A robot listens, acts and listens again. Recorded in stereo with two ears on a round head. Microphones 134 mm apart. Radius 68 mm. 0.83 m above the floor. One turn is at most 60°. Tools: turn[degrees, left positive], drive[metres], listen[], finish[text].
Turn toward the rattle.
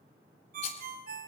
Thought: The rattle: about 45° left or 135° left.
Action: turn[45]
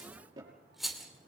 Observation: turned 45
Action: finish[Found it: a rattle, straight ahead, 2 to 4 m away.]